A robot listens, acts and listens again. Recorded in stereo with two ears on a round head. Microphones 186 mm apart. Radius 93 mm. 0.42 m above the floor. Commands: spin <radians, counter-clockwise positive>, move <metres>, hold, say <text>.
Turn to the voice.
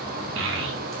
spin -1.05
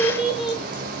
say Found it: a child speaking, straight ahead, 2 to 4 m away.